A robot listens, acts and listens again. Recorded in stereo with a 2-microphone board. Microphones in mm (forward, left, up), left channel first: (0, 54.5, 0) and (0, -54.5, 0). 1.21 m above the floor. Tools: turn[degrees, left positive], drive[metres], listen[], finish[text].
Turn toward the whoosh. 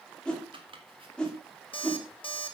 Action: turn[30]
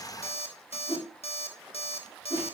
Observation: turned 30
Thought: So it is at 140° left.
Action: turn[140]
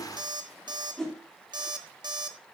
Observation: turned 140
Action: finish[Found it: a whoosh, straight ahead, 2 to 4 m away.]